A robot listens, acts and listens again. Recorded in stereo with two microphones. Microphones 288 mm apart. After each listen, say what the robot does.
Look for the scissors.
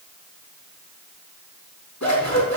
Turn 65° left.
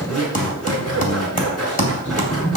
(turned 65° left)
Facing the scissors, over 4 m away.